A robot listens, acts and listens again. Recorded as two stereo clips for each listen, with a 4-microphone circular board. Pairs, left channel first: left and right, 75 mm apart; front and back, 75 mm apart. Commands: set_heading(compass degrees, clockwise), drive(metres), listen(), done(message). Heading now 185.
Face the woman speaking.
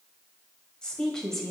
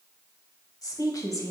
done("Found it: a woman speaking, straight ahead, 1 to 2 m away.")